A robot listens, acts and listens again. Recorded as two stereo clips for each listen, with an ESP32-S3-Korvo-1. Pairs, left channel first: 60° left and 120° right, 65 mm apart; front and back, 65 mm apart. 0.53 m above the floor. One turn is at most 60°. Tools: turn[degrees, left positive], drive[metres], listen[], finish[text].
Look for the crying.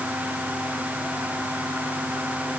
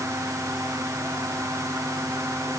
Action: listen[]
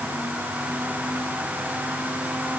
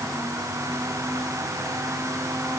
Action: listen[]
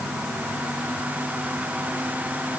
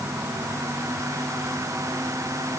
Action: finish[I can't make out crying to turn to.]